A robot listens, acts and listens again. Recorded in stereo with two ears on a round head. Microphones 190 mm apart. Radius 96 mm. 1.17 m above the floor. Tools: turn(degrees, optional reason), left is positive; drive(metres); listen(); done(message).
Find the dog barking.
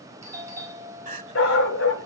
turn(degrees=65, reason="The dog barking: about 65° left or 115° left.")
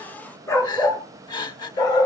turn(degrees=20, reason="So it is at 20° left.")
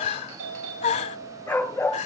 turn(degrees=10, reason="The dog barking is now 10° left.")
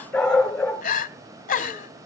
done("Found it: a dog barking, straight ahead, over 4 m away.")